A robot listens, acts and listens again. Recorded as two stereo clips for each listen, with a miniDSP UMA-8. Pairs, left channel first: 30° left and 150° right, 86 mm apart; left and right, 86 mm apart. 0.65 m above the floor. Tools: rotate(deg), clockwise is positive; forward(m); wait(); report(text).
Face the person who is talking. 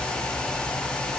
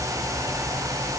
wait()
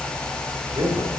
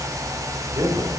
rotate(135)
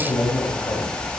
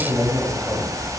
rotate(20)
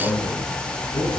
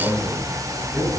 report("Found it: a man speaking, straight ahead.")